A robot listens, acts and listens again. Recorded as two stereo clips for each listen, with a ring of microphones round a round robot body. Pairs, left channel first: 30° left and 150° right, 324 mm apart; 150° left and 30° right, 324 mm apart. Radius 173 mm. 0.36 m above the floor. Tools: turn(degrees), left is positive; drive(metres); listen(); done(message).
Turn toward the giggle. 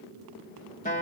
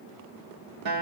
listen()
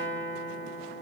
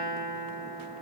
listen()
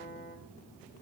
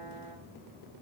done("I can't make out a giggle to turn to.")